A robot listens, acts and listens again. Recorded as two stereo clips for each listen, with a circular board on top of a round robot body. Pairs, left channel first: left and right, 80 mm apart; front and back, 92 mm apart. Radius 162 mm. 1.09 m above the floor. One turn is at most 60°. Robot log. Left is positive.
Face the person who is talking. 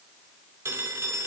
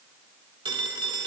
cmd idle
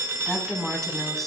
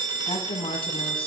end: Facing the woman speaking.